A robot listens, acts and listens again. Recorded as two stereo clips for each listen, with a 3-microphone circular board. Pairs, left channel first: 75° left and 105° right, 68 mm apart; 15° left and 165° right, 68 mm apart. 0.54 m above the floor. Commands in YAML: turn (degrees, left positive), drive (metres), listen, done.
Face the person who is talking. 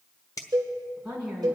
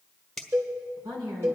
turn: 180
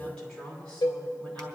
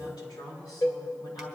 done: "Facing the woman speaking."